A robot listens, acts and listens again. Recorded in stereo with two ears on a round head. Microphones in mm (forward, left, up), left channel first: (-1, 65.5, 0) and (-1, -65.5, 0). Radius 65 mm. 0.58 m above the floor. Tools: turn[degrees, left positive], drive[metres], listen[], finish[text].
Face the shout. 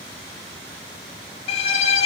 Action: listen[]
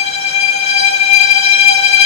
Action: listen[]
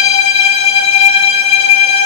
Action: finish[I can't make out a shout, only a violin.]